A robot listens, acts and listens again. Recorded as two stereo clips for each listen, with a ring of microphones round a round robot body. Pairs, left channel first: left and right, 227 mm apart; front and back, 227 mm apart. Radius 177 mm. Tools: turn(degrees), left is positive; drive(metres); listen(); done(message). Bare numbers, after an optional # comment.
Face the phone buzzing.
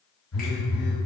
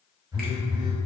# The phone buzzing: 105° left.
turn(105)
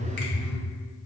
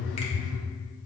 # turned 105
# The phone buzzing is now 30° left.
turn(30)
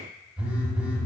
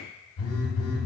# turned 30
done("Facing the phone buzzing.")